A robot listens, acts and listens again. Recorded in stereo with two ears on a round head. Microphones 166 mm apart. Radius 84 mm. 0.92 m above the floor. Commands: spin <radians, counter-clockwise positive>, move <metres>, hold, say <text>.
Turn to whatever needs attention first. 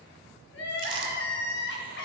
spin 1.13
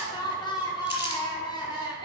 spin 0.44
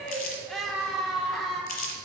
say Facing the crying, under 1 m away.